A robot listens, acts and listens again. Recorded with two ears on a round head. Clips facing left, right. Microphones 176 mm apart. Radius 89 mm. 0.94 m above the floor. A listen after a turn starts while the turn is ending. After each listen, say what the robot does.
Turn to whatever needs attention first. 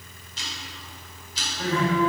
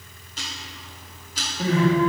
Turn 30° right.
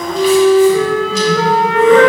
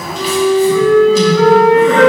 Keep listening.
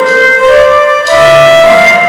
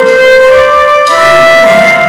Keep listening.
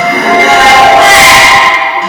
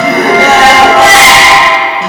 Turn 135° right.
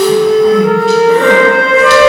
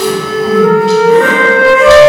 Keep listening.
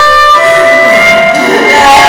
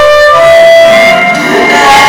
Turn 35° left.
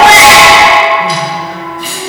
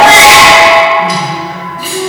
Facing the crying, 2 to 4 m away.